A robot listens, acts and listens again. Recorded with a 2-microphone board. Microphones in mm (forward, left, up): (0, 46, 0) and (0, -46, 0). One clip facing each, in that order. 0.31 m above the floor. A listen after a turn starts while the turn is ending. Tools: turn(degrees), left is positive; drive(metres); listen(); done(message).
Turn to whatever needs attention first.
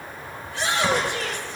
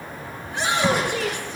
turn(degrees=-60)
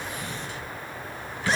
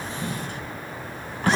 listen()
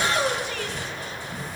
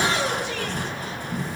done("Found it: a shout, straight ahead, over 4 m away.")